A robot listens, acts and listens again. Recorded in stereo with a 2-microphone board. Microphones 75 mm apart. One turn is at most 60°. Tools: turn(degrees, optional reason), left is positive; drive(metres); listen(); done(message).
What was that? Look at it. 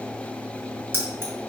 turn(degrees=-30, reason="The keys jangling: about 30° right or 150° right.")
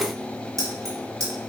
turn(degrees=-60, reason="So it is at 130° right.")
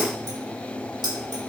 turn(degrees=-60, reason="The keys jangling is now 75° right.")
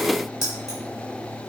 done("Found it: keys jangling, straight ahead.")